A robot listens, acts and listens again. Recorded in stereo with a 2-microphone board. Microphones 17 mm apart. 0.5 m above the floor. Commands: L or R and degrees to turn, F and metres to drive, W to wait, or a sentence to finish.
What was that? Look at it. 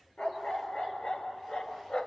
L90
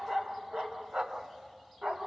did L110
R80
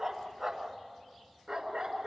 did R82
R35
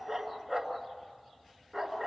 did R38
Found it: a dog barking, straight ahead.